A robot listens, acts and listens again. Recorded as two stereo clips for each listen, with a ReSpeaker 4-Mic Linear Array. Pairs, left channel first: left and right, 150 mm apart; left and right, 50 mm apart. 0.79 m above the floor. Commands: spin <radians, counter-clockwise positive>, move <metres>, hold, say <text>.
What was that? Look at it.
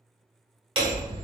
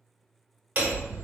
spin -0.61
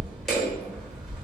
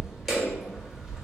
say Facing the hammering.